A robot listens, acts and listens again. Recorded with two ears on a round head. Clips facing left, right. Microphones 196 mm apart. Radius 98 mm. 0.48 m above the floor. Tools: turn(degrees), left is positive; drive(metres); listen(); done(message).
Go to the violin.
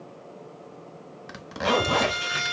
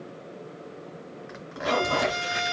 turn(degrees=90)
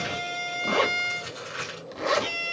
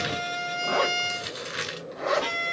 drive(metres=1.0)
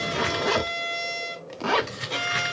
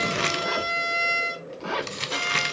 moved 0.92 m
drive(metres=1.0)
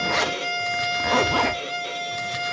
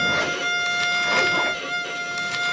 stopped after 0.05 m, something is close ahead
done("Arrived at the violin, straight ahead.")